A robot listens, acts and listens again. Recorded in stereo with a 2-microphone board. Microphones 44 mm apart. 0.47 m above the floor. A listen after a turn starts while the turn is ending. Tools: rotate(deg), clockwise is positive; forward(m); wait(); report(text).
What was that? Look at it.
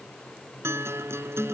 rotate(90)
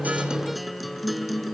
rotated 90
report("Facing the guitar.")